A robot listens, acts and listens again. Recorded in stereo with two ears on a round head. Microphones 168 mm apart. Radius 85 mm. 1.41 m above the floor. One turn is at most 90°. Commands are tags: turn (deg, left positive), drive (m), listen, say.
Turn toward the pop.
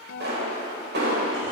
<turn deg="-65"/>
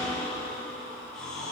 <listen/>
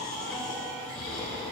<say>I heard a pop, but can't make it out now. It was about straight ahead or 50° right.</say>